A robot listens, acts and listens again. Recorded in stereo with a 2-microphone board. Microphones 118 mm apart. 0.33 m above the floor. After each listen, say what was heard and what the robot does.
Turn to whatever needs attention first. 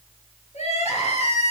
The crying: about 70° left or 110° left. Turn 70° left.
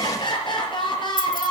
So it is at 40° left. Turn 40° left.
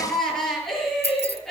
Facing the crying, over 4 m away.